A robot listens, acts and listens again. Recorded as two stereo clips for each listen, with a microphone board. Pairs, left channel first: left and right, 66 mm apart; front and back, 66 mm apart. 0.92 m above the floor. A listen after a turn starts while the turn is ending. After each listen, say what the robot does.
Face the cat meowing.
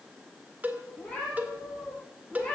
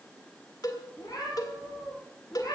Turn 15° left.
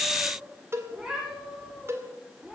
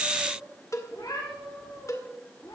Facing the cat meowing, over 4 m away.